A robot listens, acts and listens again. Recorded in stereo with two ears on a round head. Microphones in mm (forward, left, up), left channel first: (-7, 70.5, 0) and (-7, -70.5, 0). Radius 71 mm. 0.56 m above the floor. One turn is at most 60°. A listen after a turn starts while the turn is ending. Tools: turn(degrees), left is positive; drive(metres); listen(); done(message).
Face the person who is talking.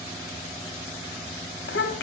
turn(degrees=60)
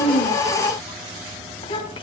turn(degrees=35)
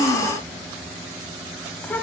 turn(degrees=10)
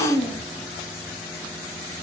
done("Facing the child speaking.")